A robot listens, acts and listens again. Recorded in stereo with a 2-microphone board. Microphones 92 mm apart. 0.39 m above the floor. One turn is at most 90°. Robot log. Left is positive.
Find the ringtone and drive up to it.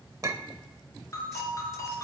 note: The ringtone: about 35° left or 145° left.
cmd yaw +35
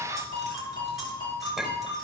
note: So it is at 110° left.
cmd yaw +90
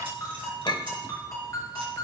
note: The ringtone is now 40° left.
cmd yaw +40
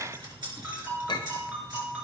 note: The ringtone is now 15° right.
cmd yaw -15
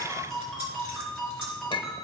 cmd fwd 1.0
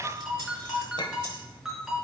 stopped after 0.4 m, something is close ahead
end: Blocked. The ringtone is further on, straight ahead.